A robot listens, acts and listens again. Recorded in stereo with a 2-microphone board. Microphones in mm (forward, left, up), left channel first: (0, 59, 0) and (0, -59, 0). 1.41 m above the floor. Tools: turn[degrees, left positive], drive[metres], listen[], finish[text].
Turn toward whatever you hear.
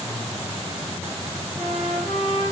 Action: turn[30]
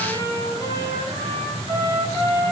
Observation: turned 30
Thought: So it is at 155° left.
Action: turn[155]
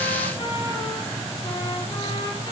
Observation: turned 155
Thought: The trumpet is now 40° left.
Action: turn[40]
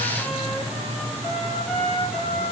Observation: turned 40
Action: finish[Found it: a trumpet, straight ahead, over 4 m away.]